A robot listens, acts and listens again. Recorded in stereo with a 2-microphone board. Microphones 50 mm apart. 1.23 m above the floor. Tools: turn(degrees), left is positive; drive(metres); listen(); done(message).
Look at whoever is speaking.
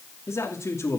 turn(degrees=90)
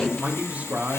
turn(degrees=-30)
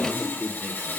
turn(degrees=-20)
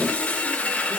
listen()
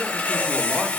listen()
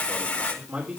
turn(degrees=-30)
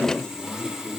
listen()
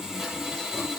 listen()
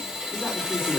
done("I heard a man speaking from this way, but can't make it out now.")